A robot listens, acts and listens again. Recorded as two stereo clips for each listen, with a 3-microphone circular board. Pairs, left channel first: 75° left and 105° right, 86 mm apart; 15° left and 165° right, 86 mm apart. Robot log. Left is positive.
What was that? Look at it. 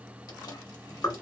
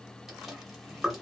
note: The chewing: 110° left.
cmd yaw +110
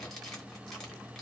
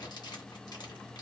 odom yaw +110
note: The chewing is now 10° right.
cmd yaw -10
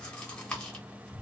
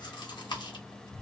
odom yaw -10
end: Found it: chewing, straight ahead.